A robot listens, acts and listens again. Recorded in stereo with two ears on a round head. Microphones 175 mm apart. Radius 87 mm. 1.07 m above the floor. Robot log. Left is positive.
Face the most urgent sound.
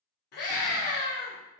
note: The scream: about 55° left or 125° left.
cmd yaw +55
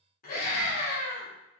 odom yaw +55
note: So it is at 50° left.
cmd yaw +50
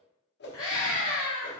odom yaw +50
note: The scream is now 20° left.
cmd yaw +20
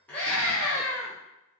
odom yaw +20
note: The scream is now 10° left.
cmd yaw +10
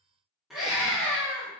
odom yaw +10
end: Found it: a scream, straight ahead, 1 to 2 m away.